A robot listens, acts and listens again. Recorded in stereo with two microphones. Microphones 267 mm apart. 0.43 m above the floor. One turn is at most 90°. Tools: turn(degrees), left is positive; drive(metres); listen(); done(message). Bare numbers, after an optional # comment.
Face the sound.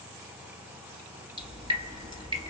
# The dripping: about 20° right or 160° right.
turn(-20)
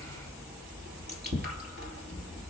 # So it is at 140° right.
turn(-90)
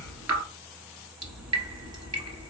# The dripping is now 65° right.
turn(-65)
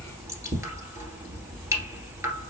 # The dripping is now 10° right.
turn(-10)
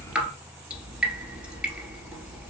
done("Found it: dripping, straight ahead, 1 to 2 m away.")